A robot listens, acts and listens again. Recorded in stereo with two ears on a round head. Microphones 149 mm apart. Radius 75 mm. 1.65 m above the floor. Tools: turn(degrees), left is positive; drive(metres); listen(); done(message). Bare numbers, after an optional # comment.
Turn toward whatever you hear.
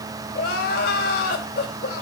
# The crying: about 60° left or 120° left.
turn(60)
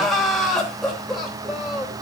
done("Found it: crying, straight ahead.")